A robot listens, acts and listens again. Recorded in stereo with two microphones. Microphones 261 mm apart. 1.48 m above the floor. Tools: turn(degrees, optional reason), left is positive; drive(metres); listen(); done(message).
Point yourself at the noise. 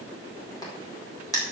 turn(degrees=30)
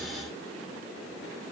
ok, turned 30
listen()
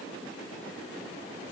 done("I heard a crack, but can't make it out now. It was about 15° right or 135° left.")